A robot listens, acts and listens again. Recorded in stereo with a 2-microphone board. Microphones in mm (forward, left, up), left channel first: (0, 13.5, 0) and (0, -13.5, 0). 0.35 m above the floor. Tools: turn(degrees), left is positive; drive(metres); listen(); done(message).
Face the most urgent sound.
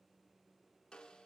listen()
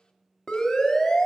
turn(degrees=20)
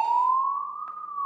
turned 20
turn(degrees=140)
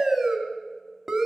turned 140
turn(degrees=-10)
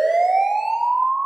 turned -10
done("Found it: a siren, straight ahead, 2 to 4 m away.")